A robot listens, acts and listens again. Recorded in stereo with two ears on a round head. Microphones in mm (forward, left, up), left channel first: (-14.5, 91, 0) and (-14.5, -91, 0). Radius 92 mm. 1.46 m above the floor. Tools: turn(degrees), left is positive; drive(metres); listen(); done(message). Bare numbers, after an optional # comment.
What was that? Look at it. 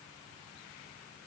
listen()
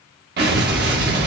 # The explosion: about 55° right or 125° right.
turn(-55)
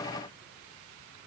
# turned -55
listen()
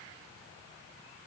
done("I heard an explosion, but can't make it out now. It was about straight ahead or 70° right.")